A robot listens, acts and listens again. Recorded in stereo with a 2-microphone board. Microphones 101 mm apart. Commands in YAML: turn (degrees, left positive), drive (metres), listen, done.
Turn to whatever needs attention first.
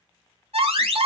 turn: -90
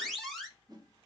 done: "Found it: an alarm, straight ahead, 2 to 4 m away."